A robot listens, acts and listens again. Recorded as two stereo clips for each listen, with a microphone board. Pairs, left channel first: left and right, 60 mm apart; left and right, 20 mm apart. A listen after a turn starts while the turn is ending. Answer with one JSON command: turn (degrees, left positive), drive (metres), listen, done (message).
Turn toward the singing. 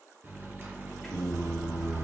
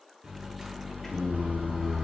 {"turn": -30}
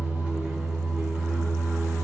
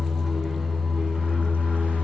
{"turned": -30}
{"turn": -100}
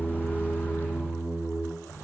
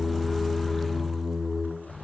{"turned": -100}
{"done": "Facing the singing."}